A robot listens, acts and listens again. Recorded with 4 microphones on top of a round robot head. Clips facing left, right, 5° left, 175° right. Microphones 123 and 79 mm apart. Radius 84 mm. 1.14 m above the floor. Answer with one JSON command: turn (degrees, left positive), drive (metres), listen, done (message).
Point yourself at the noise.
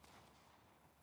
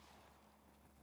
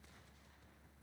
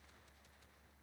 {"listen": true}
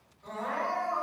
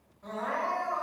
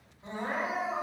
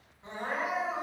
{"turn": -55}
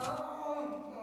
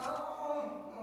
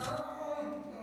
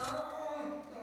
{"turn": -15}
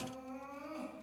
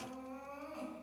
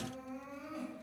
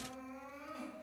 {"done": "Found it: crying, straight ahead, 2 to 4 m away."}